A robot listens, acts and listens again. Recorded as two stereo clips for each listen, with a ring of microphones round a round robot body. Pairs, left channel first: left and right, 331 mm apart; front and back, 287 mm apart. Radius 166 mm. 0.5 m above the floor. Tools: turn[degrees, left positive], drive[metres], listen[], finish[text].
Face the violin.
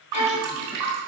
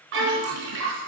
Thought: The violin: 130° left.
Action: turn[130]
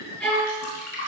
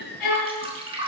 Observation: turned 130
Action: finish[Facing the violin.]